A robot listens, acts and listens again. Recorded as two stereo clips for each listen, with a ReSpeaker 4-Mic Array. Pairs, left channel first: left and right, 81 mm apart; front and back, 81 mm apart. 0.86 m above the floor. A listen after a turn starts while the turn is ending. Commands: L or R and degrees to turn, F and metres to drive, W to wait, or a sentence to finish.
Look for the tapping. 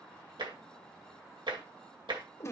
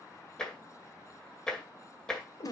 R80
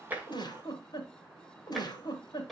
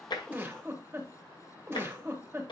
Facing the tapping.